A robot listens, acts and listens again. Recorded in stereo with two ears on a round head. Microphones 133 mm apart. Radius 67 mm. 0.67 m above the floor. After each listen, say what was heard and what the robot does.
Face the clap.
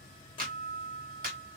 The clap: about 65° right or 115° right. Turn 65° right.
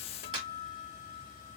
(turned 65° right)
So it is at 40° right. Turn 40° right.
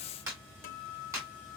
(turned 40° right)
The clap is now 20° right. Turn 20° right.
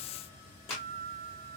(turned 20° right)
Facing the clap.